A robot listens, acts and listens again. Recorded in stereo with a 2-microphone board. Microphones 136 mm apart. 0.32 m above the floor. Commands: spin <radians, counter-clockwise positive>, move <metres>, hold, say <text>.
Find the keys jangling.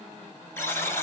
hold
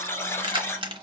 spin -0.70
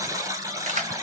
spin -1.57
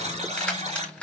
spin 0.17
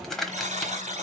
say Facing the keys jangling, 1 to 2 m away.